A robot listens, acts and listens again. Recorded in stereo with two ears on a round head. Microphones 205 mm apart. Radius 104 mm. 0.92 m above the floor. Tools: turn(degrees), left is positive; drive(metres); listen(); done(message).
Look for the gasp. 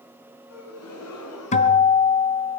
turn(degrees=70)
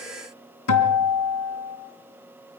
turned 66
listen()
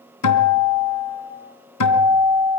done("I heard a gasp, but can't make it out now. It was about 5° left or 45° left.")